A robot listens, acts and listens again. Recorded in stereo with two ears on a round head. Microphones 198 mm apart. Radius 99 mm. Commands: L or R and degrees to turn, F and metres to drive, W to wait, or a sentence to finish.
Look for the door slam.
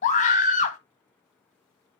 W
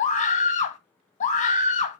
W
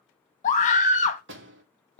R55
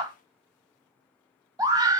W
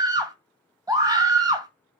I heard a door slam, but can't make it out now. It was about straight ahead or 70° right.